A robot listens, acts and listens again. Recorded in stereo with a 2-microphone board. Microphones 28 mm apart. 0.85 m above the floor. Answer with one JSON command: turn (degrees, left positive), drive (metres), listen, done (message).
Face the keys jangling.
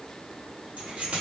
{"turn": -55}
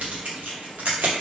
{"turn": -80}
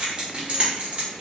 {"turn": -45}
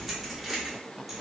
{"done": "Found it: keys jangling, straight ahead."}